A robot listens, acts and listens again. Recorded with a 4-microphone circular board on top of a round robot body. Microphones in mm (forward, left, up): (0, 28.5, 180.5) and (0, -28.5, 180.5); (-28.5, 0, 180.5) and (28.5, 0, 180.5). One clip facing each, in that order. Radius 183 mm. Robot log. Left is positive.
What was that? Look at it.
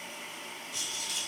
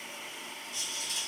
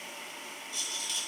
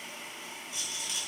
note: The rattle: 80° left.
cmd yaw +80
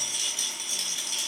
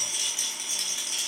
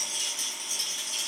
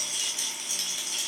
note: The rattle is now 15° right.
cmd yaw -15
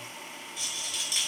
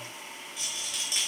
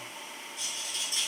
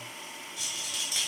end: Found it: a rattle, straight ahead, 1 to 2 m away.